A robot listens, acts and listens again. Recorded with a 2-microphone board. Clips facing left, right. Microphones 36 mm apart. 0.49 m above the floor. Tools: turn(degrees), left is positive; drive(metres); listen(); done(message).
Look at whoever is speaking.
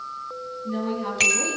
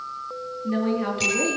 turn(degrees=-40)
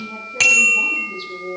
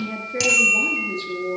turn(degrees=-100)
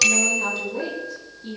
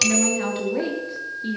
turn(degrees=-40)
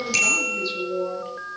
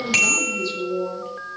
turn(degrees=15)
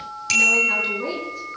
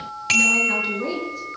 done("Found it: a woman speaking, straight ahead.")